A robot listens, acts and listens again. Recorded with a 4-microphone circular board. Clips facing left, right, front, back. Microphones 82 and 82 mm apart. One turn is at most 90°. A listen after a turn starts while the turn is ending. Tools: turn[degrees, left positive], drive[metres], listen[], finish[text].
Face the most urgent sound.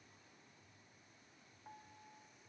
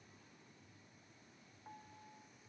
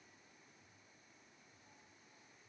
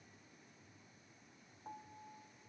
Action: listen[]
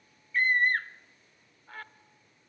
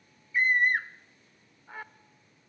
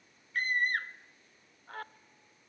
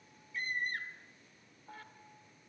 Thought: The scream: 15° right.
Action: turn[-15]
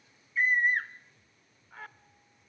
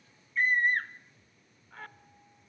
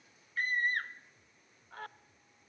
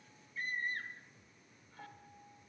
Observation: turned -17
Action: finish[Facing the scream.]